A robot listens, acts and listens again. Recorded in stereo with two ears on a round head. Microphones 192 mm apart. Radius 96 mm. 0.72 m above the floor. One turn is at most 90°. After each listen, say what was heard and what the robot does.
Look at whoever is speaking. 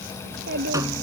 The child speaking: about 50° right or 130° right. Turn 50° right.
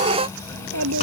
So it is at 80° right. Turn 80° right.
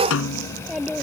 Found it: a child speaking, straight ahead.